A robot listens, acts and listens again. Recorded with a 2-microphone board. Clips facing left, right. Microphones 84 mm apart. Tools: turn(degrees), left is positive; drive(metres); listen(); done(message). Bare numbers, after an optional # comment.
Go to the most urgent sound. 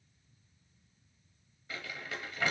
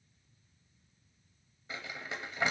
listen()
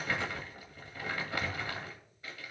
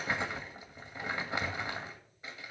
listen()
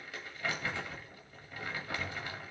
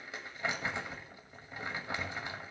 done("I can't make out anything urgent to turn to.")